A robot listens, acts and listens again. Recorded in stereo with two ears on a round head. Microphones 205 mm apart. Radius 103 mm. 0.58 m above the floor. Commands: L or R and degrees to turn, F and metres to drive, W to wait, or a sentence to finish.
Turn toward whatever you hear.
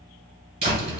R25
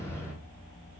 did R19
Found it: a door slam, straight ahead, 2 to 4 m away.